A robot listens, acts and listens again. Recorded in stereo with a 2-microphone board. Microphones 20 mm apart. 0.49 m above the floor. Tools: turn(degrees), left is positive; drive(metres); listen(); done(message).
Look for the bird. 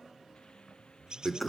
turn(degrees=-35)
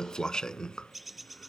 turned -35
done("Facing the bird.")